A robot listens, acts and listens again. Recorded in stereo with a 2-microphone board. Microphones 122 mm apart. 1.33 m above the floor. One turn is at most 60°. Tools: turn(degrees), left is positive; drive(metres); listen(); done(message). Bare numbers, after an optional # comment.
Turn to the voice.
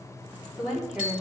turn(-30)
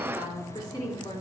# So it is at 35° left.
turn(35)
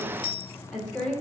# The woman speaking is now 10° left.
turn(10)
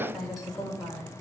done("Facing the woman speaking, 2 to 4 m away.")